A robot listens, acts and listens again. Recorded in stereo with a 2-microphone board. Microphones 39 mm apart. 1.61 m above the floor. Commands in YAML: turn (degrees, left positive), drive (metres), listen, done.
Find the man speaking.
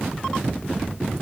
listen: true
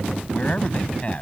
turn: 35
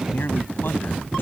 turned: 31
listen: true
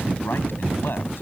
turn: 120
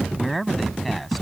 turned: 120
done: "Facing the man speaking."